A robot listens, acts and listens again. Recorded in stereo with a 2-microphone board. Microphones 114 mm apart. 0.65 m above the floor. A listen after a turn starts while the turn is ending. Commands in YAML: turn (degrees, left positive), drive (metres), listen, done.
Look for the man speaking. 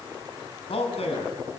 turn: 65
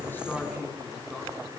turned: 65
done: "Found it: a man speaking, straight ahead."